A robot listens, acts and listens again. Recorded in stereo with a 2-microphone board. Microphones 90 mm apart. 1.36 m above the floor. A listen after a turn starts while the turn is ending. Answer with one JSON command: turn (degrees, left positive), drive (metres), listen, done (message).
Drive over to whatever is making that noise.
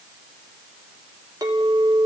{"turn": -45}
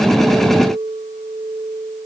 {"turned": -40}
{"turn": -95}
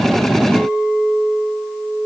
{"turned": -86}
{"turn": -10}
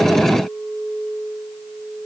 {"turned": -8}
{"drive": 1.0}
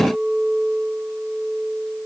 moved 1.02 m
{"drive": 1.0}
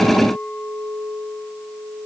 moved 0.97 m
{"drive": 1.0}
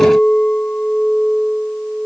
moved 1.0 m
{"turn": 15}
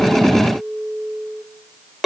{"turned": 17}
{"drive": 1.0}
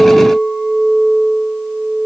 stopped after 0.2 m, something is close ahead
{"done": "I am next to the clink."}